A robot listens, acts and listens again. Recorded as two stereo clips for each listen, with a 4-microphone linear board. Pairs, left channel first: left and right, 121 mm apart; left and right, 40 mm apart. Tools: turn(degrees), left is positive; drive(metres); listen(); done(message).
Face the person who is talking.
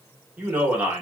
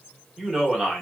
turn(degrees=-30)
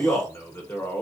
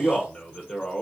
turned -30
turn(degrees=15)
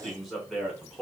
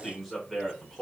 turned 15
done("Found it: a man speaking, straight ahead, 1 to 2 m away.")